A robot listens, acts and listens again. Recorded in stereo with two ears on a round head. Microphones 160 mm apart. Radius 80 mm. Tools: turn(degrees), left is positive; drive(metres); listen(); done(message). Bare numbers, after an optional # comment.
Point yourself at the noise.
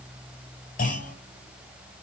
# The clunk: about 50° left or 130° left.
turn(50)
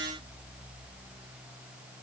listen()
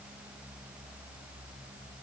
done("I heard a clunk, but can't make it out now. It was about straight ahead or 80° left.")